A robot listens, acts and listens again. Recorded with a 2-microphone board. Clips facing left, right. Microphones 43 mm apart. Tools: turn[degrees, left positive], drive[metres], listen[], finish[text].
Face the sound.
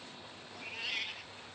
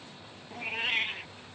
Thought: The cat meowing: about 35° right or 145° right.
Action: turn[-35]
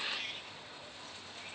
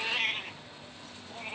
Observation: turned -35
Thought: The cat meowing: about 40° right or 140° right.
Action: turn[-40]
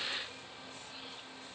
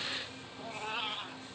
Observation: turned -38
Thought: So it is at 115° right.
Action: turn[-115]
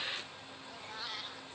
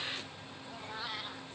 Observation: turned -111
Thought: The cat meowing is now 15° right.
Action: turn[-15]
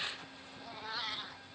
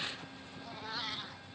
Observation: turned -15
Action: finish[Found it: a cat meowing, straight ahead.]